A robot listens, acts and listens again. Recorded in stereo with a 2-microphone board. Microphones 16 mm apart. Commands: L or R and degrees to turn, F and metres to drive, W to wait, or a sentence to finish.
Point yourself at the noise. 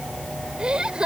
R65
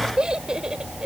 R50
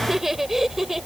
R15
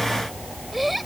Found it: laughter, straight ahead.